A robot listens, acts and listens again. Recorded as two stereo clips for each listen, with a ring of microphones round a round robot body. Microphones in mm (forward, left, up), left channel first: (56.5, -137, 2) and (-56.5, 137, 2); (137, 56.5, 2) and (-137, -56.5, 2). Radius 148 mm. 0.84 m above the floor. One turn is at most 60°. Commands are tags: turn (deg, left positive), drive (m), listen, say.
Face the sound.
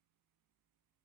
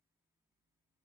<listen/>
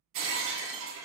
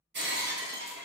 <turn deg="60"/>
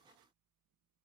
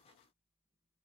<turn deg="60"/>
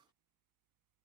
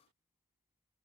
<turn deg="35"/>
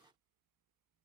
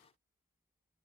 <say>Facing where the breaking glass came from. I can't hear it now.</say>